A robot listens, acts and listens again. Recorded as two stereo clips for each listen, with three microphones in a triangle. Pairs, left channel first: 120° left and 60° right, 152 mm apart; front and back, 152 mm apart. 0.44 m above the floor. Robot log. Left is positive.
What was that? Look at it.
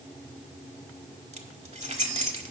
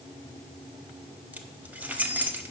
note: The keys jangling: 100° right.
cmd yaw -100
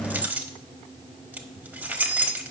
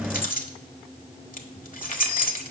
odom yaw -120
note: The keys jangling is now 20° left.
cmd yaw +20
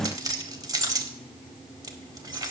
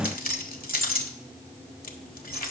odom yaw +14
end: Facing the keys jangling, 1 to 2 m away.